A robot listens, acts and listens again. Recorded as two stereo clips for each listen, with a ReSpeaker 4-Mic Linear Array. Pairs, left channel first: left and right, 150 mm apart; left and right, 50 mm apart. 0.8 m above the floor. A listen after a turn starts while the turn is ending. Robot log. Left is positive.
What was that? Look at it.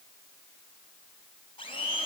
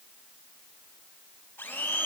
note: The blender: about 35° left or 145° left.
cmd yaw +35
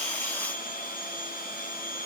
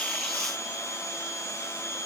note: So it is at 105° left.
cmd yaw +105
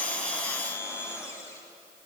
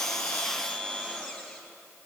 note: The blender is now 20° left.
cmd yaw +20
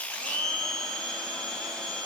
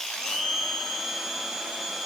end: Facing the blender, 2 to 4 m away.